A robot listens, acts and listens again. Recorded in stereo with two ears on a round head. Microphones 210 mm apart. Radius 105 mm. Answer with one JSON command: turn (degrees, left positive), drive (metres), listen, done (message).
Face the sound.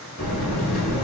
{"turn": 60}
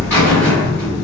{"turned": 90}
{"turn": 10}
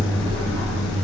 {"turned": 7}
{"done": "Facing the buzzer, 1 to 2 m away."}